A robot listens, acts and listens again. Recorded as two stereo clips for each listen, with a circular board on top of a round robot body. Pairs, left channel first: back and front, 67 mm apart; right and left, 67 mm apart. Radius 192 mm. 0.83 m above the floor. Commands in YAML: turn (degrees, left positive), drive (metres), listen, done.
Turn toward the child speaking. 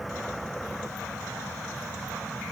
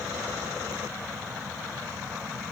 listen: true
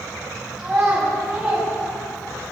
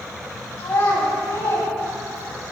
turn: -70
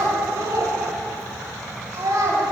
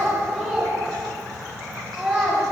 done: "Facing the child speaking."